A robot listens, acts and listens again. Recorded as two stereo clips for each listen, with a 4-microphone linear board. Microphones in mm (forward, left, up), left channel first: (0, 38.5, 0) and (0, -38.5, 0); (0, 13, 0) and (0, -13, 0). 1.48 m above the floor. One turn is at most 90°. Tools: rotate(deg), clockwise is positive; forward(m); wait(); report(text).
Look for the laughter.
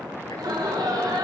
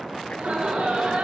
rotate(65)
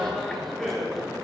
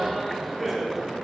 report("Facing the laughter, over 4 m away.")